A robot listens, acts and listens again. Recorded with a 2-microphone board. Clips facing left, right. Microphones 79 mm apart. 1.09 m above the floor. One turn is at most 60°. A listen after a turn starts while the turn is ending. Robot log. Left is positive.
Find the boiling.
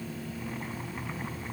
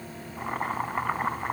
note: The boiling: about 60° right or 120° right.
cmd yaw -60
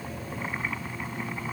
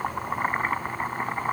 note: So it is at 50° right.
cmd yaw -50
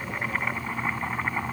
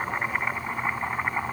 note: The boiling is now 10° right.
cmd yaw -10
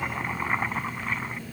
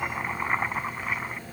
end: Found it: boiling, straight ahead.